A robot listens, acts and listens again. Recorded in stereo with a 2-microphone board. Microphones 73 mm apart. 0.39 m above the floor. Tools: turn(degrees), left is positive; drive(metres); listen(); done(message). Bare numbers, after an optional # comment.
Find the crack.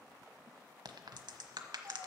# The crack: about 75° right or 105° right.
turn(-75)
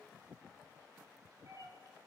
listen()
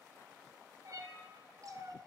done("I heard a crack, but can't make it out now. It was about straight ahead or 30° right.")